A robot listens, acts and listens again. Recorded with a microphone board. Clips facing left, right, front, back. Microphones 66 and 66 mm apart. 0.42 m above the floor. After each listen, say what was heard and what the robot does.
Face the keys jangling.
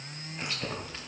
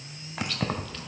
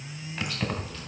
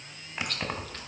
The keys jangling: 100° right. Turn 100° right.
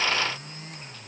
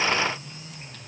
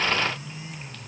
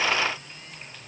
Keep listening.
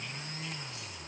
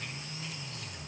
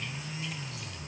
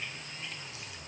Keep listening.
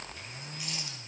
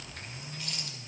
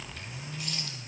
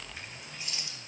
I heard keys jangling from this way, but can't make it out now.